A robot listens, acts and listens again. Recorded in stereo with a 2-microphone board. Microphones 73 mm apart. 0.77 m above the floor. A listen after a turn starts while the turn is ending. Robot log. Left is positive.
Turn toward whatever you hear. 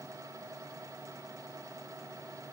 cmd idle
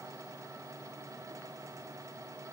cmd idle
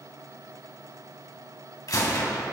note: The gunshot: about 55° left or 125° left.
cmd yaw +55
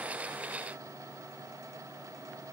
cmd idle
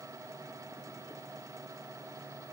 end: I heard a gunshot, but can't make it out now. It was about straight ahead or 70° left.